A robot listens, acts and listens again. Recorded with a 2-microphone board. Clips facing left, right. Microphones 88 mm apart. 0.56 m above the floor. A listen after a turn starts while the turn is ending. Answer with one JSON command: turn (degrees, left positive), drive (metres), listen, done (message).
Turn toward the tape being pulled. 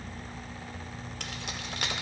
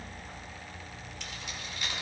{"listen": true}
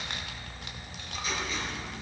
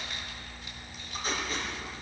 {"turn": -40}
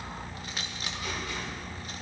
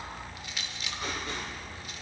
{"listen": true}
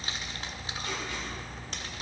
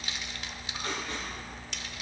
{"turn": -95}
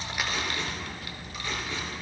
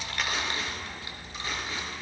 {"turn": -25}
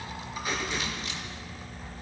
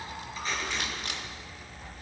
{"turn": 15}
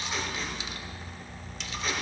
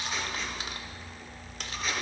{"listen": true}
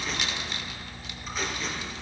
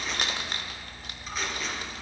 {"done": "Facing the tape being pulled."}